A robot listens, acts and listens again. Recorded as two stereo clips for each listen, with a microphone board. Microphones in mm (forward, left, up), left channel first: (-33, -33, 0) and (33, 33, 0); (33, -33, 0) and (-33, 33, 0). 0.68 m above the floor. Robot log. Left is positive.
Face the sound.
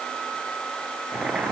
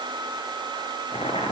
note: The boiling: 35° right.
cmd yaw -35
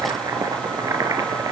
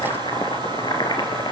note: The boiling is now 10° right.
cmd yaw -10
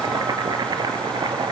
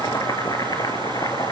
end: Facing the boiling, 2 to 4 m away.